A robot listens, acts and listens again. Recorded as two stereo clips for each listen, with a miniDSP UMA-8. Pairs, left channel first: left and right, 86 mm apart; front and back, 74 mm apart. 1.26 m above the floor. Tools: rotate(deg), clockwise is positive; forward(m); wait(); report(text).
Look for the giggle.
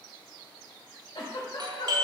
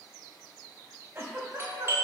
rotate(-120)
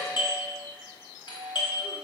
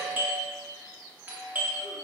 wait()
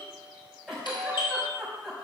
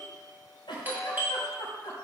report("Facing the giggle, over 4 m away.")